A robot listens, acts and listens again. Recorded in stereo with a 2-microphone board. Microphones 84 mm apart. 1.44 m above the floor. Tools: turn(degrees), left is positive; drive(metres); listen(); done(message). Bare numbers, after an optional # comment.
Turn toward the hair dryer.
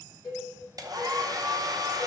# The hair dryer: about 45° right or 135° right.
turn(-45)
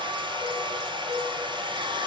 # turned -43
# So it is at 85° right.
turn(-85)
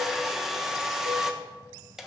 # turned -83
done("Facing the hair dryer.")